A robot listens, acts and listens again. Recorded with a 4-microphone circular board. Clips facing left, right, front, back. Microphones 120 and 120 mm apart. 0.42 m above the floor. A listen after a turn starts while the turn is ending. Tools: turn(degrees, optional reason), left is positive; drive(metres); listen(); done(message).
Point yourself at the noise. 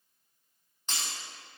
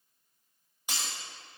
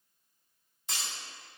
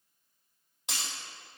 turn(degrees=-170, reason="The breaking glass: 170° right.")
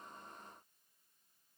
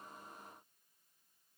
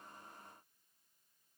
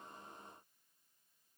done("I heard breaking glass from this way, but can't make it out now.")